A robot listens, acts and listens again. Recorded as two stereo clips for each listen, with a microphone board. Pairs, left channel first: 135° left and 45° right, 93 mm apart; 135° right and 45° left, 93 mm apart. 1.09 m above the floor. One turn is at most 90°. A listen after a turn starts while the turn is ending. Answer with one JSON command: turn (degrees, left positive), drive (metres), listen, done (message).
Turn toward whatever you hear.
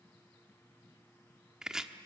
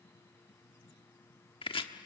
{"turn": -90}
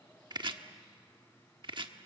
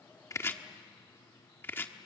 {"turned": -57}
{"turn": -70}
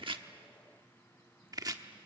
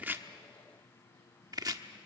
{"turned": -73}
{"done": "Found it: chopping, straight ahead, 1 to 2 m away."}